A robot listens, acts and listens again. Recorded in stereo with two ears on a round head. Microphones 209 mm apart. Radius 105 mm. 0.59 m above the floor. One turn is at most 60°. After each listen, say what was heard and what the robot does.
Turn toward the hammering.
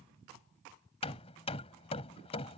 The hammering: about 25° left or 155° left. Turn 25° left.
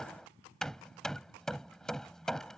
Found it: hammering, straight ahead.